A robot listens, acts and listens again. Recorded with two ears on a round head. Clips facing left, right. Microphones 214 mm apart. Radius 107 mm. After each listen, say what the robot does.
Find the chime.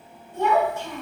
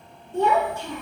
Keep listening.
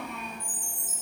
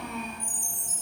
Turn 25° right.
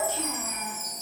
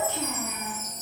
Facing the chime.